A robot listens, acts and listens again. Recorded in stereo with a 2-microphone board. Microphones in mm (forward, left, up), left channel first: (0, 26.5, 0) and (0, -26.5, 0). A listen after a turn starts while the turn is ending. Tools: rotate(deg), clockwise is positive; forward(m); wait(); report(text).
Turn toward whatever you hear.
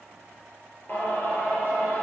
rotate(-40)
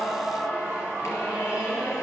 rotate(-100)
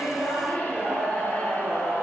rotate(-30)
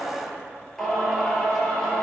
report("Found it: singing, straight ahead.")